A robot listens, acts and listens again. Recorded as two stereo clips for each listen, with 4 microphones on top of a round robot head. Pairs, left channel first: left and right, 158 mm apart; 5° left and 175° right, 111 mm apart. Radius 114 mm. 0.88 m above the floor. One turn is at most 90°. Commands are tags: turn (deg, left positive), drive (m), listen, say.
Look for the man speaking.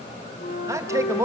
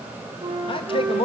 <turn deg="-20"/>
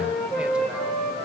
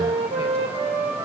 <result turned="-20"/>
<listen/>
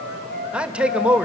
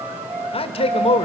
<turn deg="-10"/>
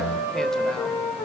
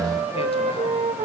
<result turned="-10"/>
<listen/>
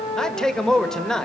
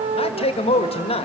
<say>Facing the man speaking, 1 to 2 m away.</say>